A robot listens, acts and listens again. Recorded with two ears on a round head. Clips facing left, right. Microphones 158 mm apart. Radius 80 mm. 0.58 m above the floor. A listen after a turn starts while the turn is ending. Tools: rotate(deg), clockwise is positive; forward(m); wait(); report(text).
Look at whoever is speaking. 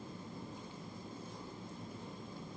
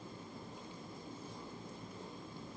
wait()
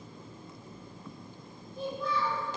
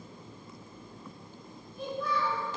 rotate(-25)
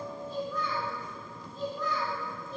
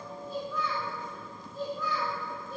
rotate(10)
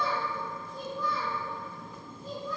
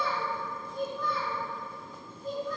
report("Found it: a child speaking, straight ahead.")